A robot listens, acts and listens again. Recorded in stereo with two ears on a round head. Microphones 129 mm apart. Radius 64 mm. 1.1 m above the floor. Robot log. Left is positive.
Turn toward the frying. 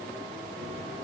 cmd idle
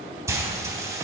note: The frying: about 20° right or 160° right.
cmd yaw -20
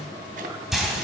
end: Facing the frying, 2 to 4 m away.